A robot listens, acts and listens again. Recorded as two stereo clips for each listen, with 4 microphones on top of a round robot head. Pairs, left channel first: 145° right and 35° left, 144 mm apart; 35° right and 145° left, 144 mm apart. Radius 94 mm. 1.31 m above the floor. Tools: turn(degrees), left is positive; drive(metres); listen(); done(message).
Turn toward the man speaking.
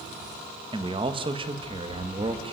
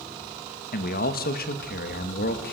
turn(degrees=-20)
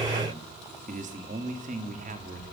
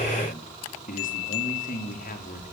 done("Facing the man speaking, over 4 m away.")